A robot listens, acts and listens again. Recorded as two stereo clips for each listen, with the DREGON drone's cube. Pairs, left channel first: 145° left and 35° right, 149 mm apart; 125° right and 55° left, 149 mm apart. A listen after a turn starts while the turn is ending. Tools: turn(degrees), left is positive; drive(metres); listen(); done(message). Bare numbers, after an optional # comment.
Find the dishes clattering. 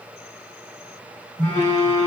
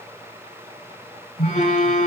listen()
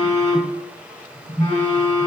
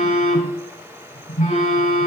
listen()
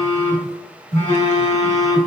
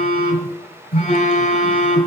done("I can't make out dishes clattering to turn to.")